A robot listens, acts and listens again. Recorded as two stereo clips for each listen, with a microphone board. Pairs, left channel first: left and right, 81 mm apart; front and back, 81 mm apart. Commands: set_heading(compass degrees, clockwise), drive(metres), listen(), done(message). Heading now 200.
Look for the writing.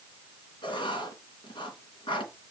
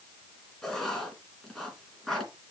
set_heading(115)
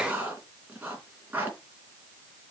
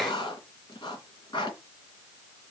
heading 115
set_heading(135)
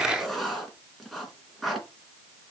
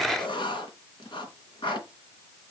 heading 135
done("Facing the writing.")